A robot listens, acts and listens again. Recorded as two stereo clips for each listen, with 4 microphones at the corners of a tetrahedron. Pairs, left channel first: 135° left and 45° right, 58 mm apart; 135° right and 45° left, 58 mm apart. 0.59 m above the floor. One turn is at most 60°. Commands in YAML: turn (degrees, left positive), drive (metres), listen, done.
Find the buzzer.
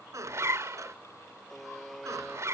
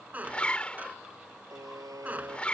turn: 45
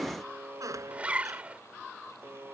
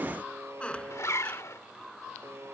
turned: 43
done: "Found it: a buzzer, straight ahead."